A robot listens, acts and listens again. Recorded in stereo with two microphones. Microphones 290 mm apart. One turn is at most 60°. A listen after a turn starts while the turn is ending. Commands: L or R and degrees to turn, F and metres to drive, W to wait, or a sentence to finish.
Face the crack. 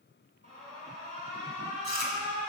W
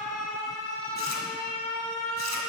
W
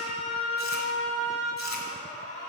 I can't make out a crack to turn to.